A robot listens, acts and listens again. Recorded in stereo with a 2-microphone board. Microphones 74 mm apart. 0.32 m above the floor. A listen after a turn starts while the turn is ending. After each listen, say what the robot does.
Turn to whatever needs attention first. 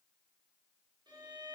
Keep listening.
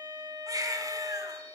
Turn 50° right.
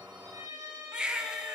Turn 15° right.
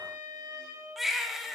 Found it: a baby crying, straight ahead, 1 to 2 m away.